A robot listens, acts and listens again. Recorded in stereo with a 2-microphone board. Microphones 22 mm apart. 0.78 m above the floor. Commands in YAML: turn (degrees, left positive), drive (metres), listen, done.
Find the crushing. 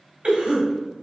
listen: true
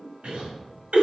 listen: true
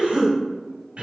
done: "I can't make out crushing to turn to."